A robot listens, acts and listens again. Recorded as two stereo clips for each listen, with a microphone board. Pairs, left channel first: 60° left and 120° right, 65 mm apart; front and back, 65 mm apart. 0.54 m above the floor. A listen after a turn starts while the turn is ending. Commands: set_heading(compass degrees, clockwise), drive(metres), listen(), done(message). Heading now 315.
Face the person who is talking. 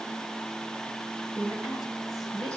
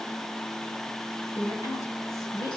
set_heading(345)
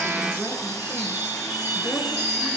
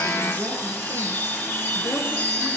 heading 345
listen()
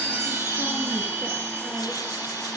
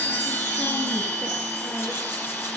listen()
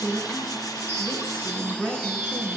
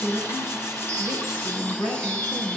done("Facing the woman speaking.")